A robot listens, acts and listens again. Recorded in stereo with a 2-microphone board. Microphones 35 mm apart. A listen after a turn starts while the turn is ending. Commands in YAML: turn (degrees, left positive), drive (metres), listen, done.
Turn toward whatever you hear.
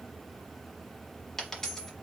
turn: 30
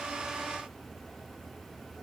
listen: true
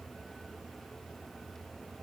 done: "I heard a dropped coin, but can't make it out now. It was about 15° right or 135° left."